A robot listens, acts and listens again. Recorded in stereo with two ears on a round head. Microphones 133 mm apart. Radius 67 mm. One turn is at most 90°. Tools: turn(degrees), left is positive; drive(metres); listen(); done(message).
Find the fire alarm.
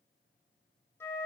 listen()
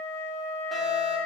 turn(degrees=30)
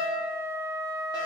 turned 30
turn(degrees=90)
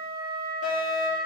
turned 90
turn(degrees=60)
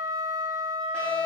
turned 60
turn(degrees=10)
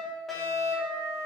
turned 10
done("Facing the fire alarm, 2 to 4 m away.")